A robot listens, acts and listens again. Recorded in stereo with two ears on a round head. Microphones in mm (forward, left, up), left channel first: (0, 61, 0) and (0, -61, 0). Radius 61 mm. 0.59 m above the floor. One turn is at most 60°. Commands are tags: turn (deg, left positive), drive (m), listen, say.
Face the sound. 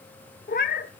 <turn deg="60"/>
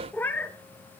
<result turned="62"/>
<turn deg="15"/>
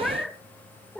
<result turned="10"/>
<say>Found it: a cat meowing, straight ahead, 1 to 2 m away.</say>